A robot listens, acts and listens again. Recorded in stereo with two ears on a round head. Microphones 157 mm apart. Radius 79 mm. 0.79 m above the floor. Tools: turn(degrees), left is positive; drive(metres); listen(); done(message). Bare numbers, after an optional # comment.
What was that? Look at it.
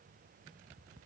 listen()
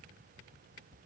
listen()
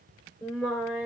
turn(30)
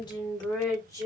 # So it is at 160° left.
turn(160)
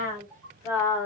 # The singing is now 20° left.
turn(20)
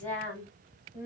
# The singing is now 10° left.
turn(10)
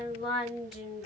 done("Facing the singing, 2 to 4 m away.")